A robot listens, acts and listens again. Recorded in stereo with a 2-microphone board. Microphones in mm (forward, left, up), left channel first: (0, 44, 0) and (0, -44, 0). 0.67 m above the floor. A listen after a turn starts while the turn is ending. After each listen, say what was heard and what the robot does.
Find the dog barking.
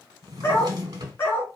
The dog barking: about 25° left or 155° left. Turn 25° left.
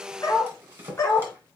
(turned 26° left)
The dog barking: about 30° left or 150° left. Turn 30° left.
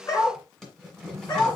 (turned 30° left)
So it is at 135° left. Turn 135° left.
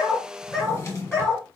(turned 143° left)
Facing the dog barking, 2 to 4 m away.